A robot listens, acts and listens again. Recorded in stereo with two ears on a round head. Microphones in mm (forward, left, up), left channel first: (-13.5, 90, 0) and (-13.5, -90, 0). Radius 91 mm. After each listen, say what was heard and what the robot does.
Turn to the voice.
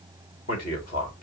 The man speaking: about 45° left or 135° left. Turn 45° left.
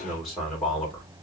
Facing the man speaking.